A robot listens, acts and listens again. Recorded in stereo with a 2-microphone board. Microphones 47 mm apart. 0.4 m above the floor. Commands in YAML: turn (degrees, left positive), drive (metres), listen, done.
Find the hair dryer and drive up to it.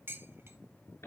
listen: true
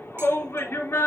listen: true
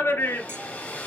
turn: 35
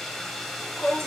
drive: 1.0
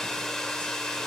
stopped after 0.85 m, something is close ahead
turn: 15
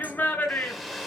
done: "I am next to the hair dryer."